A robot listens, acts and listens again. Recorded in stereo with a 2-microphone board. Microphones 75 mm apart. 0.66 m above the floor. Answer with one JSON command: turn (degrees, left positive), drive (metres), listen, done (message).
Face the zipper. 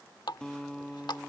{"listen": true}
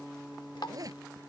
{"turn": -50}
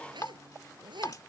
{"turn": -80}
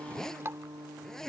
{"done": "Found it: a zipper, straight ahead."}